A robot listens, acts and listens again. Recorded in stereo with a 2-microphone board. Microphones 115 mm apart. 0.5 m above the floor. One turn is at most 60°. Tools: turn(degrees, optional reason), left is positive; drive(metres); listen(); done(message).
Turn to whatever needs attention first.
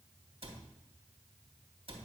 listen()
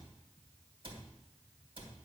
listen()
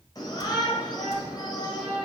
turn(degrees=35, reason="The shout: about 35° left or 145° left.")
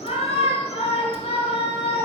turn(degrees=60, reason="So it is at 105° left.")
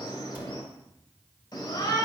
turn(degrees=40, reason="The shout is now 40° left.")
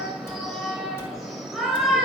done("Found it: a shout, straight ahead, 2 to 4 m away.")